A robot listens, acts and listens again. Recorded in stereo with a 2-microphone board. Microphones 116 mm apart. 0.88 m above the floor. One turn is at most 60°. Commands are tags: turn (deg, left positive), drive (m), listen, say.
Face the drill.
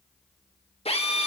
<turn deg="60"/>
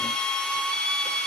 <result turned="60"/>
<say>Facing the drill.</say>